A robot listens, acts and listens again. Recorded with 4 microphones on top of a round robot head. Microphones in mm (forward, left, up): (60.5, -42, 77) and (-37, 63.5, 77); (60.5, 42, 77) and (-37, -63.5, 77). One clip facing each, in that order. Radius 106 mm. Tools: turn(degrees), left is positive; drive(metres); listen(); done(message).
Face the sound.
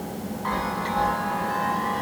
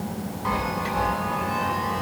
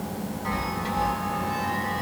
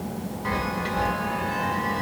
turn(degrees=-150)
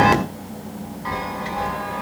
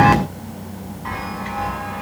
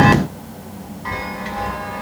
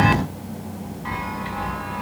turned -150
done("Found it: a chime, straight ahead, 2 to 4 m away.")